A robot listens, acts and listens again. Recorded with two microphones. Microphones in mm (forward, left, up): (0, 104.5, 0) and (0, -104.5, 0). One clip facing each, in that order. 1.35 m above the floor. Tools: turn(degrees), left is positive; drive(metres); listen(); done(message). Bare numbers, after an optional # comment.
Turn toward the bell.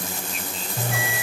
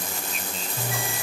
# The bell: about 65° left or 115° left.
turn(65)
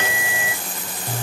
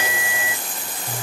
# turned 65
# So it is at 40° left.
turn(40)
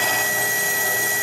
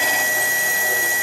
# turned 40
done("Found it: a bell, straight ahead.")